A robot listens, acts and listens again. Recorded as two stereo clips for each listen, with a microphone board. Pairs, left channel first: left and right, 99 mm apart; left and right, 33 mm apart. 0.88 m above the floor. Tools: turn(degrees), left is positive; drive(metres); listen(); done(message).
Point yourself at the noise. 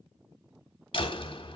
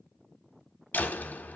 turn(degrees=60)
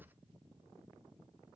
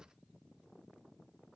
listen()
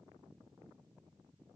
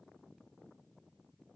done("I heard a door slam, but can't make it out now. It was about straight ahead or 60° left.")